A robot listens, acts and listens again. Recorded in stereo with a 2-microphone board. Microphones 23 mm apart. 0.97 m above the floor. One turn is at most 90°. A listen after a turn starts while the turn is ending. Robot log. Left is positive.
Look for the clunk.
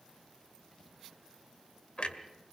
note: The clunk: about 65° left or 115° left.
cmd yaw +65
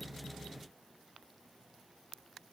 cmd idle
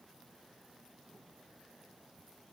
end: I heard a clunk, but can't make it out now. It was about straight ahead or 50° left.